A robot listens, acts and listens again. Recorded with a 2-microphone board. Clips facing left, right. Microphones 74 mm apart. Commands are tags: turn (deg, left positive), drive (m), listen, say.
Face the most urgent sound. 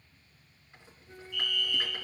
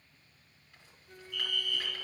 <turn deg="-55"/>
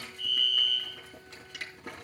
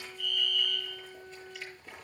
<turn deg="-60"/>
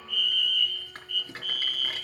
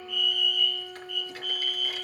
<say>Facing the fire alarm.</say>